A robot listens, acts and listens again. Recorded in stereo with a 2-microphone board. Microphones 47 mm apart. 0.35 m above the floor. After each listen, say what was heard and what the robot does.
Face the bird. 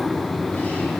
Keep listening.
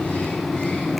Keep listening.
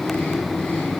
I can't make out a bird to turn to.